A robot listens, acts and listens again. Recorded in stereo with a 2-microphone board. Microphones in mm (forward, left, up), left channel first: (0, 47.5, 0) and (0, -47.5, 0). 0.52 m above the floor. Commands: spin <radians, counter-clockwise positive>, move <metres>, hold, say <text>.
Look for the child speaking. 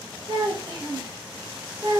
spin -1.57
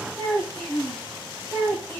spin -0.17
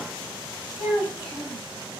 say Found it: a child speaking, straight ahead.